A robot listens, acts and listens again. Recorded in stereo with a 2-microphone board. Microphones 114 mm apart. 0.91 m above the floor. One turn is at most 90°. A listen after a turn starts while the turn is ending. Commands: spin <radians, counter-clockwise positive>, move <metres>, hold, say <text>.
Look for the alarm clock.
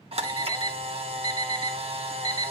spin -0.61
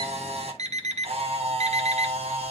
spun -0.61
spin -1.57
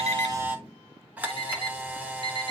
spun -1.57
spin -0.79
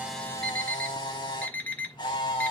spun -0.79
spin 0.26
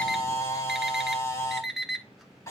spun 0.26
say Facing the alarm clock, 1 to 2 m away.